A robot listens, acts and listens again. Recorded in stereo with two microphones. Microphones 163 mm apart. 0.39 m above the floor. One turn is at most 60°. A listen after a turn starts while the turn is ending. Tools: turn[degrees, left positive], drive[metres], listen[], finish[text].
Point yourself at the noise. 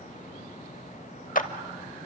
Thought: The clap: about 55° left or 125° left.
Action: turn[55]
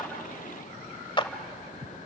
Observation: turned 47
Thought: So it is at 35° left.
Action: turn[35]
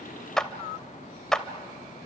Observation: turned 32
Action: finish[Facing the clap, 1 to 2 m away.]